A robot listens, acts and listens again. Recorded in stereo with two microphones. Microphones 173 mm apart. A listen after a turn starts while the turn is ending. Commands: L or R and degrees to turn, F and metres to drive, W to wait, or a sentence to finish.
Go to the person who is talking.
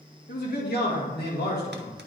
L70
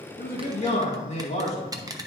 L40
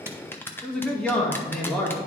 F1.0
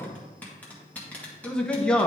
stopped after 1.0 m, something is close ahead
I am next to the man speaking.